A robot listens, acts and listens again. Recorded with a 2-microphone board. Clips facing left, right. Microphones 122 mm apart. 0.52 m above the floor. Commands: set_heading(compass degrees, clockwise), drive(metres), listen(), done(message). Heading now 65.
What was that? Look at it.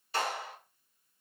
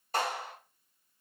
set_heading(110)
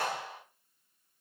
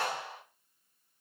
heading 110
done("Facing the clap.")